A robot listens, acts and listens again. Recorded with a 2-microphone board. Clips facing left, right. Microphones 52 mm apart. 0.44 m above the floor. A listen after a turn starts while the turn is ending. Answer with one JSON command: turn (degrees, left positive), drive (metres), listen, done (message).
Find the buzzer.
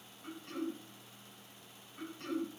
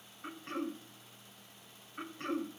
{"listen": true}
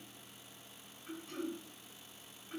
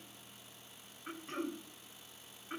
{"listen": true}
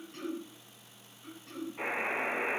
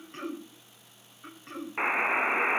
{"turn": -90}
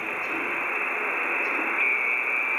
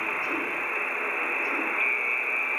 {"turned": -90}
{"turn": 15}
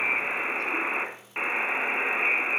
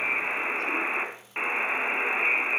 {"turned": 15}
{"done": "Found it: a buzzer, straight ahead."}